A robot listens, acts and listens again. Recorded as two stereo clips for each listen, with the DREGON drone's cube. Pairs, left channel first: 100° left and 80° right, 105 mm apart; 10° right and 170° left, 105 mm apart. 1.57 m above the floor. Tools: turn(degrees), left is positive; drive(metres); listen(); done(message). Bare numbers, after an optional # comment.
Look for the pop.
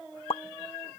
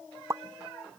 # The pop: 115° left.
turn(115)
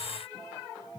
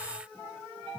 done("Facing where the pop came from. I can't hear it now.")